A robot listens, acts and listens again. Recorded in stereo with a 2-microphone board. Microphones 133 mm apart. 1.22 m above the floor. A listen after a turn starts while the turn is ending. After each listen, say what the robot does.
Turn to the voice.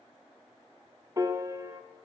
Keep listening.
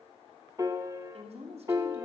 Turn 60° right.
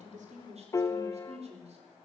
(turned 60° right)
Turn 60° right.
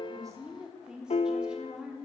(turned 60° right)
Facing the woman speaking.